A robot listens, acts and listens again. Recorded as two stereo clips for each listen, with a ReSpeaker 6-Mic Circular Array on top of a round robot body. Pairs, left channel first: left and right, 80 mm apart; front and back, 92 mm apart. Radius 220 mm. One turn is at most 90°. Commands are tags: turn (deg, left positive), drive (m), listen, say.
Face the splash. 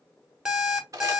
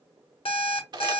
<listen/>
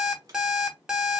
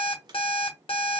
<listen/>
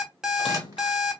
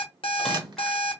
<turn deg="85"/>
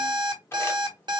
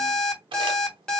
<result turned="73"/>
<turn deg="15"/>
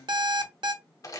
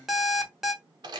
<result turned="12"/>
<say>I heard a splash from this way, but can't make it out now.</say>